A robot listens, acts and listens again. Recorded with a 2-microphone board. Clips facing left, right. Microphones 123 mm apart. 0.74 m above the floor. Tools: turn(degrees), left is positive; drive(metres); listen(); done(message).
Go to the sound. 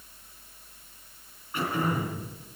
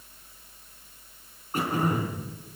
turn(degrees=-40)
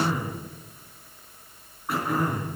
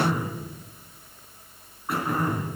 drive(metres=1.0)
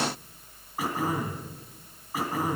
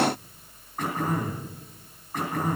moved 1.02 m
drive(metres=1.0)
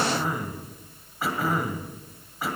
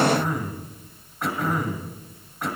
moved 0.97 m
drive(metres=1.0)
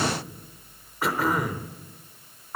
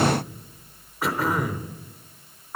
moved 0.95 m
drive(metres=1.0)
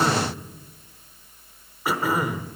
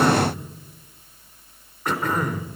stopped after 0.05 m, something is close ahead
turn(degrees=10)
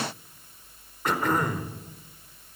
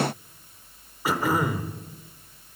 done("Arrived at the throat clearing, straight ahead.")